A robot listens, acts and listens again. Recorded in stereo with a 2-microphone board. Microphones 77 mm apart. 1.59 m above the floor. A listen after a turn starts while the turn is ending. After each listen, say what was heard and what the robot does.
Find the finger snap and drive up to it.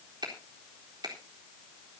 The finger snap: about 70° right or 110° right. Turn 70° right.
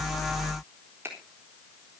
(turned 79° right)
So it is at 30° right. Turn 30° right.
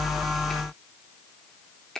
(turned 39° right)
The finger snap is now 10° left. Turn 10° left.
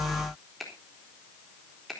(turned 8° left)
Drive 1.0 m forward.
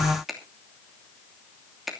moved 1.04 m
Drive 1.0 m forward.
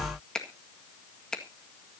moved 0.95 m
The finger snap is now 10° left. Turn 10° left.
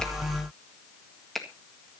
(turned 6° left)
Drive 1.0 m forward.
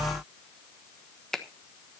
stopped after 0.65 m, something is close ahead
The finger snap is now 10° left. Turn 10° left.
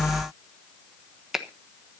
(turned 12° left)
I am next to the finger snap.